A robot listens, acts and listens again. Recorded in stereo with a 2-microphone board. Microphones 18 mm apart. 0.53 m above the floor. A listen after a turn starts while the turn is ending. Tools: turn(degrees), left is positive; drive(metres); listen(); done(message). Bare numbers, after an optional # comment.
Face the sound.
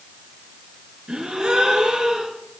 # The gasp: about 65° right or 115° right.
turn(-65)
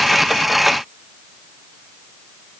listen()
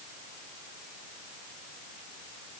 done("I heard a gasp, but can't make it out now. It was about straight ahead or 50° right.")